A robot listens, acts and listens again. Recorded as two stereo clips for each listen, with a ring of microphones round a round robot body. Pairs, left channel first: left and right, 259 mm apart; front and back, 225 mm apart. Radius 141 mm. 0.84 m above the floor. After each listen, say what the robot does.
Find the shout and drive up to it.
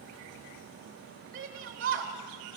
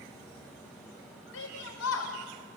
Turn 30° right.
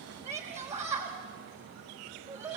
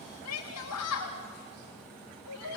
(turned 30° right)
Turn 10° right.
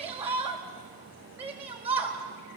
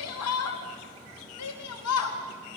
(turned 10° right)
Drive 1.0 m forward.
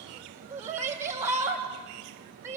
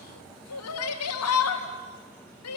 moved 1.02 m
Turn 10° right.
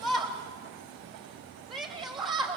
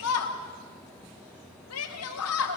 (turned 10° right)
Drive 1.0 m forward.
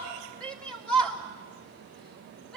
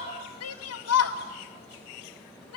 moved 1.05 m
Drive 1.0 m forward.
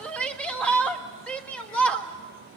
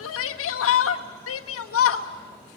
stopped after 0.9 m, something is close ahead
I am next to the shout.